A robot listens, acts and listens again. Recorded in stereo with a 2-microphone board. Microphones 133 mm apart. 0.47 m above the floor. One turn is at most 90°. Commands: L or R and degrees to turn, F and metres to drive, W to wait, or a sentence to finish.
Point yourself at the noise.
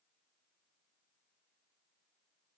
W
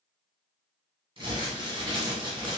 R40
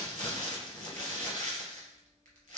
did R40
R90
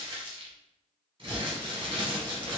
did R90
R40
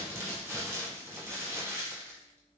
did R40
R20
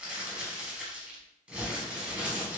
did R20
R10
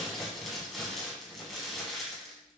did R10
Found it: crumpling, straight ahead, 1 to 2 m away.